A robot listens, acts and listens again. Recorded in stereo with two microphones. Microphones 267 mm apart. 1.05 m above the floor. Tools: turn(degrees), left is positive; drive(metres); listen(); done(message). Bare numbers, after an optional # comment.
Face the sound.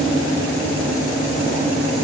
listen()
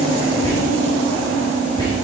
# The whispering: about 15° left or 165° left.
turn(15)
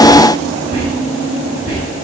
# So it is at 150° left.
turn(150)
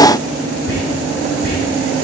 # The whispering is now 40° left.
turn(40)
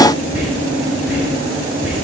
done("Found it: whispering, straight ahead, over 4 m away.")